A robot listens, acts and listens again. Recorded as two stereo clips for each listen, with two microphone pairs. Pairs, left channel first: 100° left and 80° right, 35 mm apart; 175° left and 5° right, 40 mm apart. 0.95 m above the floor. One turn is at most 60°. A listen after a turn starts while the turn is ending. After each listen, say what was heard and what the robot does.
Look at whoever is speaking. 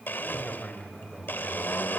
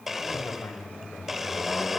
The man speaking: 165° left. Turn 60° left.
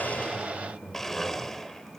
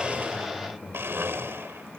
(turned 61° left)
The man speaking is now 105° left. Turn 60° left.
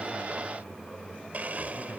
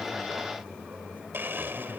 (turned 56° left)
The man speaking is now 50° left. Turn 50° left.
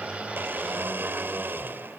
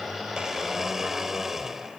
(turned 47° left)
Keep listening.
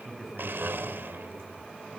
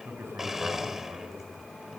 Facing the man speaking.